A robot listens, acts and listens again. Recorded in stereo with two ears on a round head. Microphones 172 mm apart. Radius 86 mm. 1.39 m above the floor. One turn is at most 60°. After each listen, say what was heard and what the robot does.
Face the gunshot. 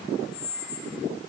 Keep listening.
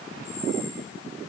Keep listening.
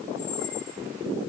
I can't make out a gunshot to turn to.